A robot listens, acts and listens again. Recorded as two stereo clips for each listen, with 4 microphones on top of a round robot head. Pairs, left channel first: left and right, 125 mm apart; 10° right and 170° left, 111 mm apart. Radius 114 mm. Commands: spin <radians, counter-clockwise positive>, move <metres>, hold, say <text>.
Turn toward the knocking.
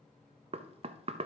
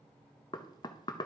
spin -0.96
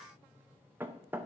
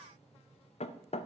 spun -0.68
spin -0.26
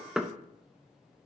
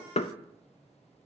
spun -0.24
say Facing the knocking, under 1 m away.